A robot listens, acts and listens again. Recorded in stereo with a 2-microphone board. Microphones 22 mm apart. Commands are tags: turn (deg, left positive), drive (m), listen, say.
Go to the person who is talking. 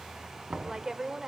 <turn deg="-30"/>
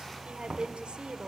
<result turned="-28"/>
<turn deg="-120"/>
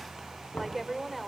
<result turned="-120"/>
<drive m="1.0"/>
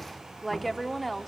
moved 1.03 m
<drive m="1.0"/>
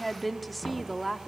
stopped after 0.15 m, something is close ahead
<say>Arrived at the woman speaking, straight ahead.</say>